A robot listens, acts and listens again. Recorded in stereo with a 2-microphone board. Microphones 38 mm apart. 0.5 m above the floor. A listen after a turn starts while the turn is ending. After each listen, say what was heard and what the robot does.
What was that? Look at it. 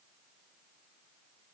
Keep listening.
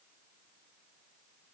Keep listening.
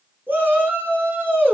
The shout: about 65° right or 115° right. Turn 65° right.
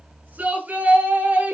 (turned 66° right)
So it is at 45° right. Turn 45° right.
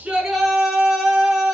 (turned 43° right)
Found it: a shout, straight ahead, over 4 m away.